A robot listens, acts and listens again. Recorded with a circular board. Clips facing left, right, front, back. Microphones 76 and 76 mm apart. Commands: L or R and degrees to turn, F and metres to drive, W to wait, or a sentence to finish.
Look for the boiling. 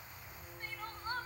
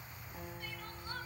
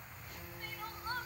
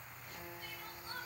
W
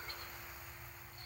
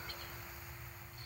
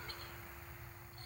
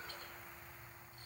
W
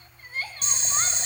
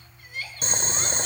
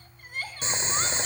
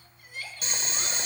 R60
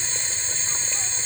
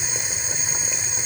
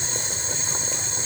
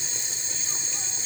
R15
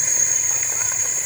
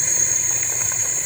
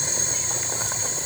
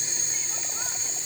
Facing the boiling.